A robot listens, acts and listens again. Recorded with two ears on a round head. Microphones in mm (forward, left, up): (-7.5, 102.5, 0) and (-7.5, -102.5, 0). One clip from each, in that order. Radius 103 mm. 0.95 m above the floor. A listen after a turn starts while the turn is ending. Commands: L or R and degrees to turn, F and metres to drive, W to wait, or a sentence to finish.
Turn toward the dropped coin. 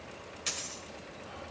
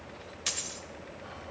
R20
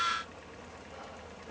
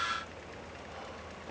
W
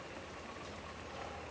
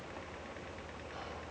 I heard a dropped coin, but can't make it out now. It was about straight ahead or 140° right.